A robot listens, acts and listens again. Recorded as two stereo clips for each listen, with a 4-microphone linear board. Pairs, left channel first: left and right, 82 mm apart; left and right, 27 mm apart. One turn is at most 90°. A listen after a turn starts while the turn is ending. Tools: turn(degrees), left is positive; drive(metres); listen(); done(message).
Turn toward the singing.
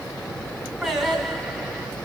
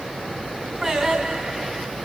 turn(degrees=-30)
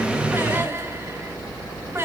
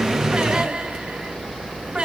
turn(degrees=-90)
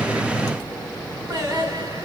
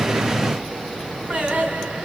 turn(degrees=-55)
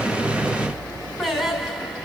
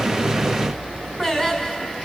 done("Found it: singing, straight ahead, over 4 m away.")